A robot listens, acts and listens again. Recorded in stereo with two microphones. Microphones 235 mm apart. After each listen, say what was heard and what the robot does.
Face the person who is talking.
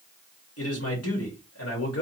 Turn 90° left.
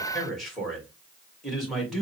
Facing the man speaking, 2 to 4 m away.